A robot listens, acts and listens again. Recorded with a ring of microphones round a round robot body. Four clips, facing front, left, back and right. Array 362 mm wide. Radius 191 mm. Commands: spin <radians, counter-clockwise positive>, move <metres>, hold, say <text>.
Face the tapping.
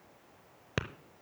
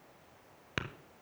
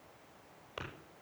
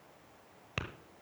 spin 0.26
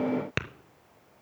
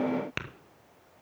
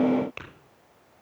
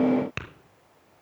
say Facing the tapping, under 1 m away.